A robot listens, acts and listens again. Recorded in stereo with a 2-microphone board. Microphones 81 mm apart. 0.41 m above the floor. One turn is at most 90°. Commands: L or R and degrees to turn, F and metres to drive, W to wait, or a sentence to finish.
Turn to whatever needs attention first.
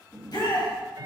L60
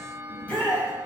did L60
L15
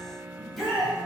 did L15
Facing the shout.